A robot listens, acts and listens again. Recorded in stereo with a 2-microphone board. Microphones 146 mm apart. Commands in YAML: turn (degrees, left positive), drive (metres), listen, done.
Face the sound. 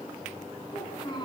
turn: 30
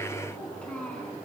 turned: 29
turn: 10
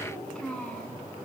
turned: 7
done: "Found it: a child speaking, straight ahead, over 4 m away."